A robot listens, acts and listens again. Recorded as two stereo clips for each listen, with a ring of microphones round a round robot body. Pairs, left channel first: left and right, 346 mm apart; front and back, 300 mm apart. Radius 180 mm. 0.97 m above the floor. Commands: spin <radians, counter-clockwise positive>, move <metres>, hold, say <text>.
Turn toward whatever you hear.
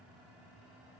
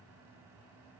hold
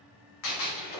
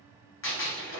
spin 0.87
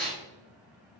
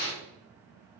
say Facing the gunshot, under 1 m away.